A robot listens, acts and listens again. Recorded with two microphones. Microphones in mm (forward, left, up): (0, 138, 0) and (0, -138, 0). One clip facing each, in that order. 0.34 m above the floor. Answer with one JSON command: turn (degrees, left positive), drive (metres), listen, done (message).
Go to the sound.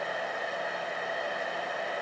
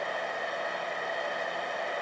{"listen": true}
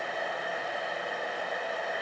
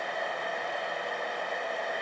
{"listen": true}
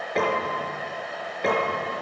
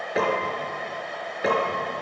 {"turn": -30}
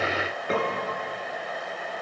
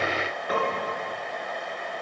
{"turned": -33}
{"turn": 30}
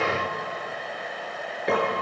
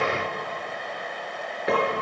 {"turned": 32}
{"drive": 1.0}
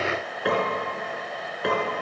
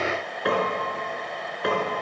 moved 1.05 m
{"drive": 1.0}
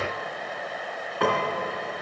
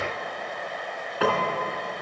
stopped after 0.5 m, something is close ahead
{"done": "Blocked. The piano is further on, straight ahead."}